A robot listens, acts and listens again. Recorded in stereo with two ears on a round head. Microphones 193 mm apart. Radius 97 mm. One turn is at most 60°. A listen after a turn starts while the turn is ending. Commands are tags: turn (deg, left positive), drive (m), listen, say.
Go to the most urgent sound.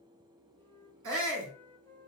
<turn deg="-60"/>
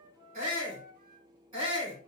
<turn deg="-20"/>
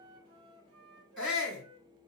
<drive m="1.0"/>
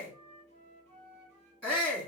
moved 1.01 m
<drive m="1.0"/>
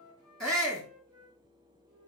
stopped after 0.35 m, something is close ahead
<say>I am next to the shout.</say>